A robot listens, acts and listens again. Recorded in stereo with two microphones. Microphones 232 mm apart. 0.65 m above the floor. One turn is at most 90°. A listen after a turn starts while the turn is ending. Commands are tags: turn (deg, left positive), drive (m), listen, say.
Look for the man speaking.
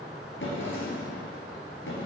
<listen/>
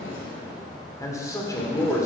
<turn deg="30"/>
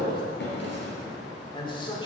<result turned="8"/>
<turn deg="20"/>
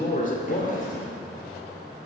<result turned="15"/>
<turn deg="90"/>
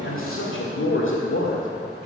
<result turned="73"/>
<turn deg="70"/>
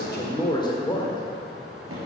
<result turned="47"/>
<turn deg="20"/>
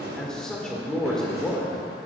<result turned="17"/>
<say>Found it: a man speaking, straight ahead.</say>